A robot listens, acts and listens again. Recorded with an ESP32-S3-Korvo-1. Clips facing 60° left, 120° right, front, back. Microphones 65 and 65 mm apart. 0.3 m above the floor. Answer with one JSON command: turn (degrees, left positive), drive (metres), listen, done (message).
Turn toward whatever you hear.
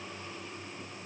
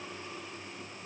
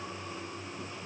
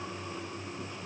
{"listen": true}
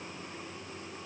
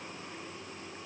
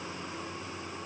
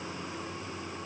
{"listen": true}
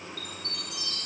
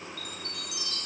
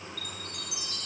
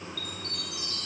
{"turn": 80}
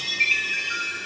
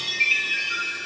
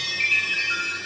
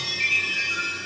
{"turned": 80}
{"turn": -20}
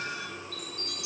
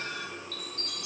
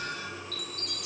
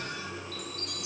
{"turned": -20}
{"done": "Found it: a chime, straight ahead."}